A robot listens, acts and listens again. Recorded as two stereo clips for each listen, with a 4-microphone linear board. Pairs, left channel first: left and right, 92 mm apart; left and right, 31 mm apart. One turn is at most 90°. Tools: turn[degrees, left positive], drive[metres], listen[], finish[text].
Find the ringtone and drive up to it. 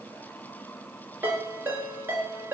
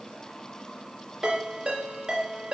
Thought: The ringtone: about 20° right or 160° right.
Action: turn[-20]
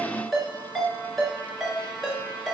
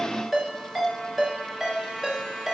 Action: drive[1.0]
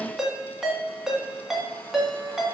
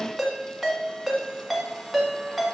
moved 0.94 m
Action: drive[1.0]
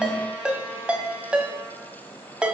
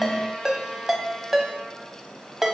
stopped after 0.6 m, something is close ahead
Thought: The ringtone is now 10° right.
Action: turn[-10]
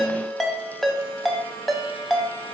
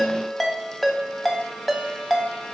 Action: finish[Arrived at the ringtone, straight ahead.]